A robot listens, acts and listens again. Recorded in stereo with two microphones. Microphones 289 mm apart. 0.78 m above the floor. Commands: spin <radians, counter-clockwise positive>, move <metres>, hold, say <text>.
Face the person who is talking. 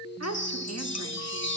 spin -1.05
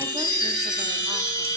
hold
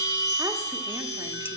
hold
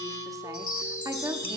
spin -0.26
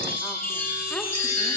hold
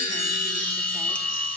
hold
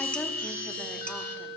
say I heard a woman speaking from this way, but can't make it out now.